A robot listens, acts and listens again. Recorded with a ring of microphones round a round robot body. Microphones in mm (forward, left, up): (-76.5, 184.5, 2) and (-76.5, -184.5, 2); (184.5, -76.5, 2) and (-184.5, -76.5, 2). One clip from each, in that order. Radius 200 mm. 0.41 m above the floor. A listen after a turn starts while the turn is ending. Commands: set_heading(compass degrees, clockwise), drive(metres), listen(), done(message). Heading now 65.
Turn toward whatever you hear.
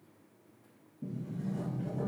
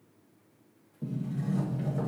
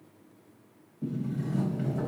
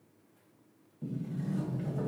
set_heading(160)
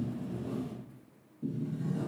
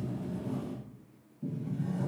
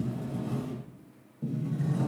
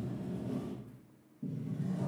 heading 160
set_heading(150)
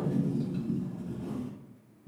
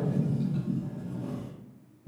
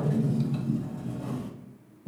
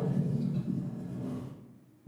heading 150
done("Facing the sliding door, 1 to 2 m away.")